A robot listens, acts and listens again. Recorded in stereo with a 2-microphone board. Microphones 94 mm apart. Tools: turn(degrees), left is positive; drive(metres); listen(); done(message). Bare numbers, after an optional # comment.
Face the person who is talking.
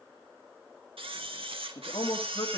turn(90)
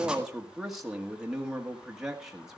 done("Facing the man speaking, 1 to 2 m away.")